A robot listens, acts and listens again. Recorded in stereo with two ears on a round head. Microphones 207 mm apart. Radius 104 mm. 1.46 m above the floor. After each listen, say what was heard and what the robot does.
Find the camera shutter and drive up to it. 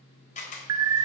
The camera shutter: about 35° left or 145° left. Turn 35° left.
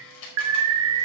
So it is at 110° left. Turn 110° left.
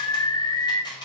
The camera shutter is now 20° left. Turn 20° left.
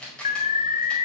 Drive 1.0 m forward.
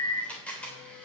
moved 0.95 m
Drive 1.0 m forward.
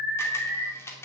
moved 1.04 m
The camera shutter is now 10° left. Turn 10° left.
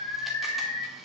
Keep listening.
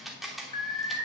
Drive 1.0 m forward.
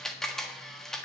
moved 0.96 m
Drive 1.0 m forward.
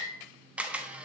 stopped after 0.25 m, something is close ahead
I am next to the camera shutter.